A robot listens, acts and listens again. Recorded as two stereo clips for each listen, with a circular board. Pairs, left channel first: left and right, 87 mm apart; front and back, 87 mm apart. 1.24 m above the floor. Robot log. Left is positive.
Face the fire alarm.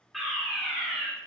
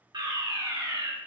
note: The fire alarm: straight behind.
cmd yaw +180
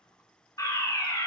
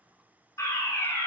note: The fire alarm is now 50° left.
cmd yaw +50
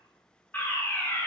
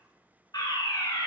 note: The fire alarm is now 25° left.
cmd yaw +25
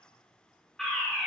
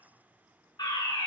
end: Found it: a fire alarm, straight ahead.